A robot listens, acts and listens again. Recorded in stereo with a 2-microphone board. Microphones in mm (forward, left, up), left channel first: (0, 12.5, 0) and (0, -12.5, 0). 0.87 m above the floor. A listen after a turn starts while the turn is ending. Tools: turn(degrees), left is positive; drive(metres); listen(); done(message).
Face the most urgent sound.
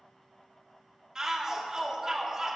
turn(degrees=-25)
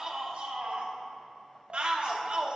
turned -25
turn(degrees=-125)
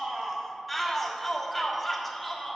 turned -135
done("Facing the shout.")